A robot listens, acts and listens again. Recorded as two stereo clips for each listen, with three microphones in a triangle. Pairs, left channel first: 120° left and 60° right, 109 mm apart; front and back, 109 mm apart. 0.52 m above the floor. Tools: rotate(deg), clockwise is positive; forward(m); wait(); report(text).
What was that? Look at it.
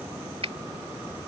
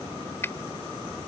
rotate(65)
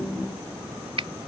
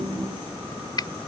rotate(40)
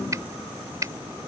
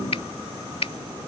report("Found it: a finger snap, straight ahead.")